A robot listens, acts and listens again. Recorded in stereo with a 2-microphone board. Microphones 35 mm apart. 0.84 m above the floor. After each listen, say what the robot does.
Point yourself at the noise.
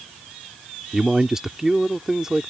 Turn 30° right.
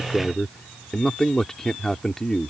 Turn 15° left.
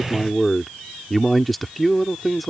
Found it: a man speaking, straight ahead.